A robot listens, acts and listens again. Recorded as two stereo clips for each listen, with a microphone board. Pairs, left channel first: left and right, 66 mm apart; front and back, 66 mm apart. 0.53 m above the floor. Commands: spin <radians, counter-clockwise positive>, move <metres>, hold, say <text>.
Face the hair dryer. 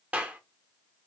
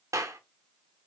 hold
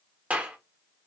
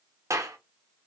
hold
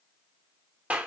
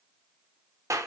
say I can't make out a hair dryer, only a clap.